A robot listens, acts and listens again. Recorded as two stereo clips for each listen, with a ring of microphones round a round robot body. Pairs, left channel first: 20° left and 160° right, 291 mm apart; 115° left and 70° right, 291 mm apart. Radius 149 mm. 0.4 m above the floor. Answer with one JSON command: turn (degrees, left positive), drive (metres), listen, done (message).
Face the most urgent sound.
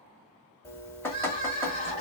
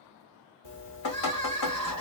{"turn": 140}
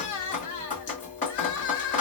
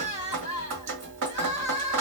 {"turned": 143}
{"done": "Facing the crying, 2 to 4 m away."}